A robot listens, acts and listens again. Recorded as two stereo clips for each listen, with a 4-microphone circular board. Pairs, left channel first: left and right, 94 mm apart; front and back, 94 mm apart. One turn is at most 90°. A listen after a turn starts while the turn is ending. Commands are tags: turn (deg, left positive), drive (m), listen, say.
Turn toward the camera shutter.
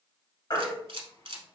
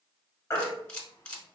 <turn deg="-75"/>
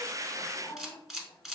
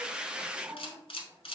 <say>Facing the camera shutter.</say>